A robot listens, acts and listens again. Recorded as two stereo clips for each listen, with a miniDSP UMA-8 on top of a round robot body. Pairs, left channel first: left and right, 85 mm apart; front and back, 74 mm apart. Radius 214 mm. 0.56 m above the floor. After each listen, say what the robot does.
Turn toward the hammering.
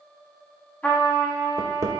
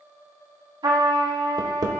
Turn 145° right.
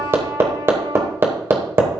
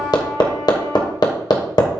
Turn 25° right.
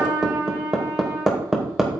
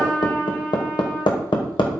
Facing the hammering, 1 to 2 m away.